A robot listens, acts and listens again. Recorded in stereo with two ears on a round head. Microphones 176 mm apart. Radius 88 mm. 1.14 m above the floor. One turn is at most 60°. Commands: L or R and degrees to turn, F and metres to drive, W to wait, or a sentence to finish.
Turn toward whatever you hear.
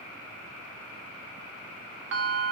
R60
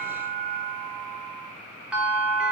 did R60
Found it: a bell, straight ahead.